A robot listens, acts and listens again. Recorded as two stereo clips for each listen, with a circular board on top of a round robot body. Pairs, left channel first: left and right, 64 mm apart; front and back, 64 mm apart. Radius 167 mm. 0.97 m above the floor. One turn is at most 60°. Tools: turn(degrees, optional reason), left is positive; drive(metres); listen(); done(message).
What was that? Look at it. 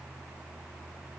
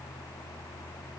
listen()
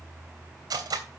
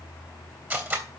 turn(degrees=-60, reason="The cutlery clinking: 120° right.")
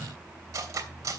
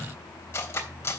turn(degrees=-55, reason="The cutlery clinking is now 55° right.")
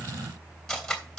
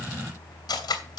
done("Found it: cutlery clinking, straight ahead.")